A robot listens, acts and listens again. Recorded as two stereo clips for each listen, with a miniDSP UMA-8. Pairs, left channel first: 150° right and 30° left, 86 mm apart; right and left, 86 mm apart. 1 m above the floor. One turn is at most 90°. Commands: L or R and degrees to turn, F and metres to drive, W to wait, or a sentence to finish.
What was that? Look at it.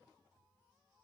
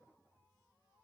W
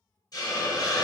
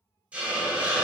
L90
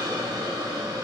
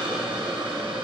L70
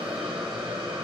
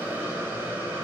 L25
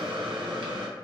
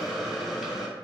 Found it: a hiss, straight ahead, under 1 m away.